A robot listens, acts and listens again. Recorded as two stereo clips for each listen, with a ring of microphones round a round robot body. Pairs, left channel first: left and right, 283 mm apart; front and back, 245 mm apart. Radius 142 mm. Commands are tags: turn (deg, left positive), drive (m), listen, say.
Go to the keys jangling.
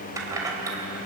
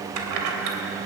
<turn deg="-170"/>
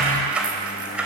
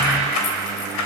<drive m="1.0"/>
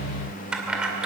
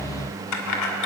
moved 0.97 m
<drive m="1.0"/>
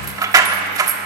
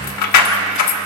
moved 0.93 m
<turn deg="-10"/>
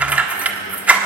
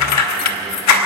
<drive m="1.0"/>
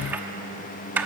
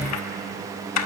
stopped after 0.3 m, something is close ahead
<say>I am next to the keys jangling.</say>